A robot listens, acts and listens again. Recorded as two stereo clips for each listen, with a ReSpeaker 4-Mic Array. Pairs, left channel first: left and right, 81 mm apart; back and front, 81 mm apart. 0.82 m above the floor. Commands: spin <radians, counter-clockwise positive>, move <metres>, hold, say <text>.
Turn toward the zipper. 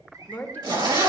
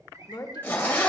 spin -2.01
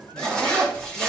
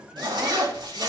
spin 0.17
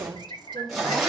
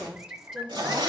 say Found it: a zipper, straight ahead, 2 to 4 m away.